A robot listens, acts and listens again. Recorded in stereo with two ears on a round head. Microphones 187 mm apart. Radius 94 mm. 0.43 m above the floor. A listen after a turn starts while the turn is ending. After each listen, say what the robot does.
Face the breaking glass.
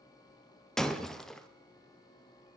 Turn 30° left.
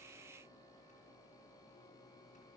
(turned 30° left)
Keep listening.
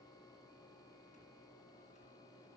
I heard breaking glass, but can't make it out now. It was about 30° right or 150° left.